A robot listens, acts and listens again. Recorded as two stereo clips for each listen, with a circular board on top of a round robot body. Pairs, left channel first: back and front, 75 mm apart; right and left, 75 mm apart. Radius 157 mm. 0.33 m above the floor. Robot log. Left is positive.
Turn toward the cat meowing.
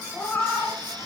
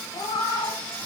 note: The cat meowing: 105° right.
cmd yaw -105
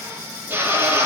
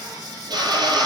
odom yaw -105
cmd idle
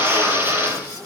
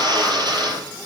cmd idle
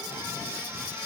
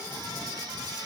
end: Facing where the cat meowing came from. I can't hear it now.